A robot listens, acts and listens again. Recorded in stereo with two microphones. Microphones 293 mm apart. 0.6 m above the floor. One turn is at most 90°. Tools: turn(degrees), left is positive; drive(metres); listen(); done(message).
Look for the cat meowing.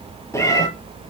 turn(degrees=30)
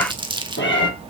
turn(degrees=90)
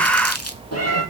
turn(degrees=60)
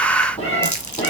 turn(degrees=20)
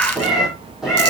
done("Facing the cat meowing, over 4 m away.")